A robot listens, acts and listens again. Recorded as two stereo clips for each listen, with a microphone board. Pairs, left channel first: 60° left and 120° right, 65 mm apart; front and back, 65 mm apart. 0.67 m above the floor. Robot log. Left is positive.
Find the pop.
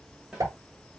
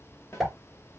note: The pop: 90° right.
cmd yaw -90
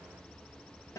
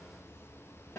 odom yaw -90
end: I heard a pop from this way, but can't make it out now.